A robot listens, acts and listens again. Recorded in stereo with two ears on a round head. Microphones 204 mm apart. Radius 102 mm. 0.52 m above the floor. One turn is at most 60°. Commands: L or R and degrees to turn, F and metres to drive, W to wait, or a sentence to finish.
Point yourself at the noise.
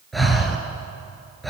L30
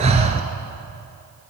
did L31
R30
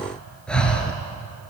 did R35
Found it: breathing, straight ahead.